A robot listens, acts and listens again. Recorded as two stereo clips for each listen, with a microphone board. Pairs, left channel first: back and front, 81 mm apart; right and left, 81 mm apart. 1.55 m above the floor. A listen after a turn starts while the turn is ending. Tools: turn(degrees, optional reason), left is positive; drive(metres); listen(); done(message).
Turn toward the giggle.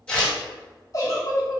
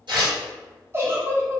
turn(degrees=140, reason="The giggle: 140° left.")
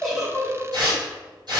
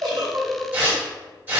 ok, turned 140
turn(degrees=65, reason="The giggle is now 65° left.")
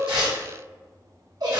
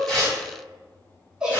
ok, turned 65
turn(degrees=10, reason="The giggle is now 10° left.")
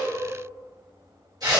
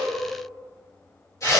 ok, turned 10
listen()
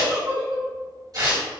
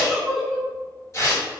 done("Found it: a giggle, straight ahead.")